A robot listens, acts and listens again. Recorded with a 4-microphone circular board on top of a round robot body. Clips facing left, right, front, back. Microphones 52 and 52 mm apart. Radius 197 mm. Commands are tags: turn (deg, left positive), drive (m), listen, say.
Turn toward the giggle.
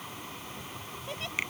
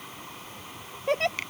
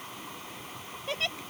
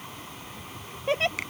<turn deg="-120"/>
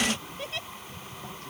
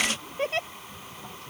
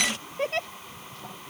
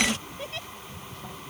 <turn deg="-40"/>
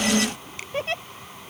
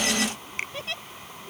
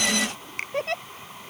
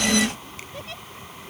<turn deg="35"/>
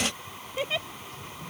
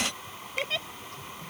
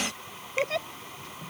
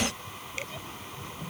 <turn deg="10"/>
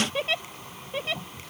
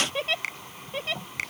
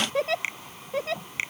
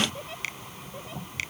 <say>Facing the giggle.</say>